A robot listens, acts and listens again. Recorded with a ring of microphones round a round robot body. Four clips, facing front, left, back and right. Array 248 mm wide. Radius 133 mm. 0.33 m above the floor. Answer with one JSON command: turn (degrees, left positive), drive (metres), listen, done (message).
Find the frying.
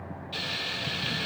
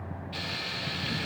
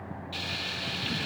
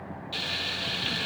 {"turn": -65}
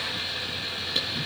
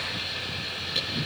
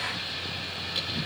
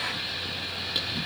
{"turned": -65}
{"turn": -20}
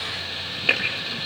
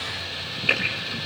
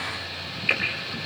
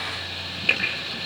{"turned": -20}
{"done": "Facing the frying."}